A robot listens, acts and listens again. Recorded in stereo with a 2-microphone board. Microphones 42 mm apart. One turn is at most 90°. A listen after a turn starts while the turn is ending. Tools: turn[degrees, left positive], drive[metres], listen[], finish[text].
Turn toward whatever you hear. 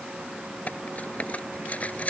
Thought: The cutlery clinking: about 35° left or 145° left.
Action: turn[35]
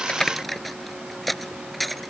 Action: finish[Found it: cutlery clinking, straight ahead.]